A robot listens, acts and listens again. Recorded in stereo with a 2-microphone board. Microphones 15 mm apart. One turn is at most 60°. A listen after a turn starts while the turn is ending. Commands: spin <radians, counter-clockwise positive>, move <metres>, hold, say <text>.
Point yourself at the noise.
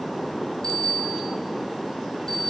spin 0.70
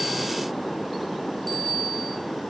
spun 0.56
spin 0.17
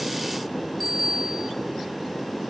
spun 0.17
say Facing the bicycle bell, 2 to 4 m away.